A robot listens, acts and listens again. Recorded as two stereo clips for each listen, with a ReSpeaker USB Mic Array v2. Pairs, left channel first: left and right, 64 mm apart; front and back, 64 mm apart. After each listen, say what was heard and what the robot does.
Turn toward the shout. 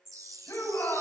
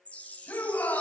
The shout: 55° left. Turn 55° left.
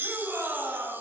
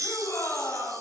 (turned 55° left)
The shout is now 25° right. Turn 25° right.
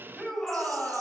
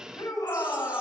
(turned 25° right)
The shout is now 10° left. Turn 10° left.
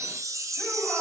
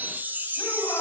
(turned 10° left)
Keep listening.
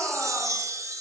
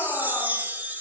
Keep listening.
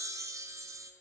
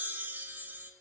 I heard a shout from this way, but can't make it out now.